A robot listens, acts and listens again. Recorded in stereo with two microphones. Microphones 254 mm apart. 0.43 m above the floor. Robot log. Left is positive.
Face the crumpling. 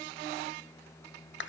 cmd idle
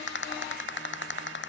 cmd idle
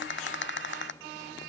end: I can't make out crumpling to turn to.